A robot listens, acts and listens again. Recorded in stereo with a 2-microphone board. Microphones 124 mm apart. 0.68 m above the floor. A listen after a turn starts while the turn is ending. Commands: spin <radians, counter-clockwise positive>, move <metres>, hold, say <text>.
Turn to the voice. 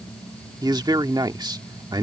spin -0.61
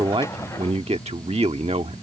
spin -1.83
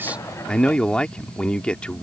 spin 0.17
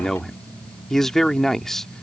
say Found it: a man speaking, straight ahead.